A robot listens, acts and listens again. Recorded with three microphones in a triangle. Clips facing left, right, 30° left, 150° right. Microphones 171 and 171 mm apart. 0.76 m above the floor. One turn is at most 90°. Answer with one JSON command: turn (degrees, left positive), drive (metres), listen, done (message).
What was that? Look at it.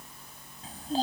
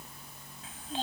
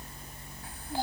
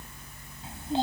{"turn": 90}
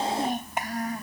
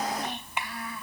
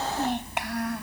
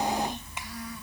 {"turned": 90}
{"turn": 45}
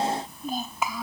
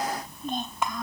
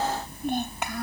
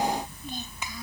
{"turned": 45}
{"done": "Facing the child speaking."}